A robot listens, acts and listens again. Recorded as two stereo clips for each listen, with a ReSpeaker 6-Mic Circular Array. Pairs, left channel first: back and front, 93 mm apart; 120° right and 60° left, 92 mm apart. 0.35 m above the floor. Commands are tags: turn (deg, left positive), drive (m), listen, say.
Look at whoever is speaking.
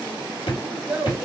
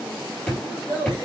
<turn deg="-80"/>
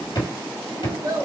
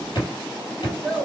<turn deg="-35"/>
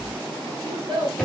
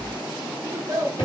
<turn deg="15"/>
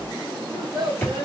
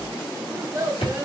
<say>Facing the child speaking, 1 to 2 m away.</say>